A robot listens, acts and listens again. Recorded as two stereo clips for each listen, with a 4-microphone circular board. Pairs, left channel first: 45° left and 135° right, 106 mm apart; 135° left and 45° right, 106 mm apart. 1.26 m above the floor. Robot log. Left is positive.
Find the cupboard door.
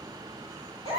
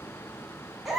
cmd idle
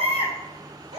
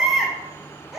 cmd idle
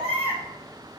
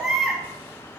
end: I can't make out a cupboard door, only a baby crying.